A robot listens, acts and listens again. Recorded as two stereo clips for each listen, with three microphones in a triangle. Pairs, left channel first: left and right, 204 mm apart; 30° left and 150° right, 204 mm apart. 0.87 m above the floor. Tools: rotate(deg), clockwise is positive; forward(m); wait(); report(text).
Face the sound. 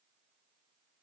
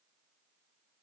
wait()
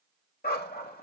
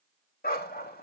rotate(-60)
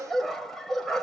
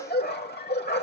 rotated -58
report("Found it: a dog barking, straight ahead.")